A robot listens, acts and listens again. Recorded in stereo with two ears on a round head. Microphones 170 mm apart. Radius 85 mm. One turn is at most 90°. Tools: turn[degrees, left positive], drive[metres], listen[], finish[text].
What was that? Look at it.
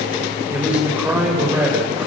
Action: turn[-30]
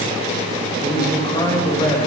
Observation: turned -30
Thought: So it is at 20° left.
Action: turn[20]
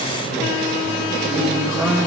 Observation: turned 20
Action: finish[Found it: a man speaking, straight ahead, over 4 m away.]